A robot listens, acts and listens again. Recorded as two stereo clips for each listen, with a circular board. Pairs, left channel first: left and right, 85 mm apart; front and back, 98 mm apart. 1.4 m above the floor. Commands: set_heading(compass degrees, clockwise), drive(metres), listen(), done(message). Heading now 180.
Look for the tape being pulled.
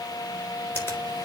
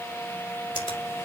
listen()
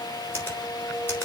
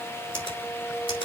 listen()
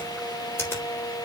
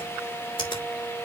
done("I can't make out tape being pulled, only a finger snap.")